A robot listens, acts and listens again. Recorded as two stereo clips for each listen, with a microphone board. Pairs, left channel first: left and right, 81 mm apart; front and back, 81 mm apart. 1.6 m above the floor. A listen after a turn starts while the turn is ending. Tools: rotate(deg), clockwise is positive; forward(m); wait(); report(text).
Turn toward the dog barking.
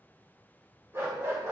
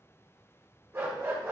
rotate(130)
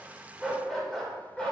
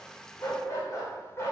rotate(-25)
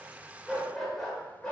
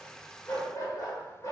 rotate(-15)
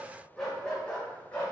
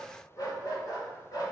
rotate(-20)
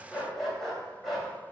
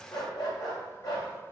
report("Found it: a dog barking, straight ahead.")